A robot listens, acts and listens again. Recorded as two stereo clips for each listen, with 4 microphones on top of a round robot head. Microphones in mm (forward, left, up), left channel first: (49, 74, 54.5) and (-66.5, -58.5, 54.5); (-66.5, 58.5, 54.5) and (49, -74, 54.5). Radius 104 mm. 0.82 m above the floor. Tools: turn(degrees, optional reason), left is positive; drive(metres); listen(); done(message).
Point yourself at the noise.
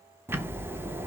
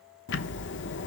turn(degrees=150, reason="The ticking: 150° left.")
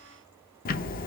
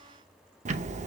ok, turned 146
done("Found it: ticking, straight ahead, under 1 m away.")